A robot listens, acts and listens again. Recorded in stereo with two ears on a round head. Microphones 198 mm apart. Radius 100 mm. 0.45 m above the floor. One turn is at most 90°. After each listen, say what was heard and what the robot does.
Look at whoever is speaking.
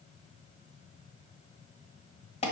Keep listening.
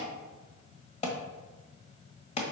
Keep listening.
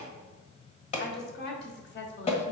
The woman speaking: about 55° left or 125° left. Turn 55° left.
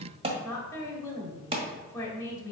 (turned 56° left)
So it is at 15° left. Turn 15° left.
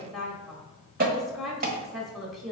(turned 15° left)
Found it: a woman speaking, straight ahead.